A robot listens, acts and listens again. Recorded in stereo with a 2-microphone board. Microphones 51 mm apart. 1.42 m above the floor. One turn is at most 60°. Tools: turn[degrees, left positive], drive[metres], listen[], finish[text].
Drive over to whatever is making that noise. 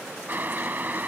Thought: The boiling: about 40° right or 140° right.
Action: turn[-40]
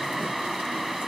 Action: drive[1.0]
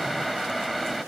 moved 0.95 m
Action: drive[1.0]
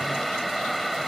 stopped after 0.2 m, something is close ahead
Action: finish[Arrived at the boiling, straight ahead.]